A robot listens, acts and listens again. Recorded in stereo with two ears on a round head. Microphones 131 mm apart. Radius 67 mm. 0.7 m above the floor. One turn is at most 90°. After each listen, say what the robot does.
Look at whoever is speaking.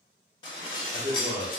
Turn 30° right.
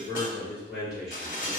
Found it: a man speaking, straight ahead.